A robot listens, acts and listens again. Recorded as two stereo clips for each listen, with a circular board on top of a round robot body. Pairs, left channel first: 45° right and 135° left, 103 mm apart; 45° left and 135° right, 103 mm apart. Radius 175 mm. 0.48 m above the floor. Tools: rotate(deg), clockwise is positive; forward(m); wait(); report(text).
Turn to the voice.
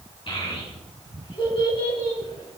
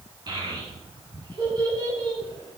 rotate(85)
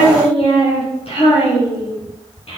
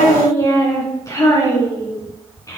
rotate(15)
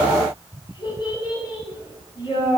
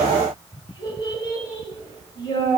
report("Facing the child speaking.")